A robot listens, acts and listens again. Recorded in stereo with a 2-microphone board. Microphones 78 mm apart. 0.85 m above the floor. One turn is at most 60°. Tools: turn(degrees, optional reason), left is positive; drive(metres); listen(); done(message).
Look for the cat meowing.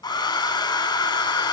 listen()
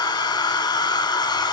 listen()
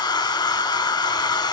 done("I can't make out a cat meowing to turn to.")